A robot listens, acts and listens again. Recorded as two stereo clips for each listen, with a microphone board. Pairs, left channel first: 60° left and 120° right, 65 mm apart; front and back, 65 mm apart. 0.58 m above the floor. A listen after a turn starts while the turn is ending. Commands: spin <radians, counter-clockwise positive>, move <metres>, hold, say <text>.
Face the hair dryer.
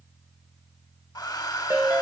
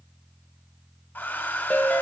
spin 1.05
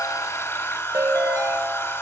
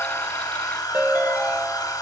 spin 0.17
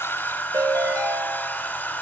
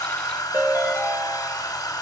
say Found it: a hair dryer, straight ahead.